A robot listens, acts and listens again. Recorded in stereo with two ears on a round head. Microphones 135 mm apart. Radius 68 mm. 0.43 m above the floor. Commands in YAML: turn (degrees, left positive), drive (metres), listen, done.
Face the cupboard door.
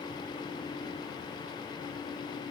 listen: true
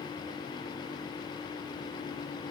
listen: true
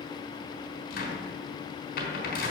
turn: 65
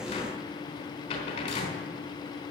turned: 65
turn: 45
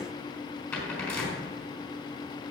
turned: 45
turn: 15
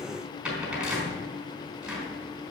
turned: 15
done: "Found it: a cupboard door, straight ahead."